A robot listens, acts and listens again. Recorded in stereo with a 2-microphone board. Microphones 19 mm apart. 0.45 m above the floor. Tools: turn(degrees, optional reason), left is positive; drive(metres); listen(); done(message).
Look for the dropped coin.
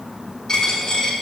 turn(degrees=35, reason="The dropped coin: about 35° left or 145° left.")
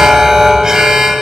listen()
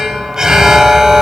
done("I heard a dropped coin, but can't make it out now. It was about straight ahead or 110° left.")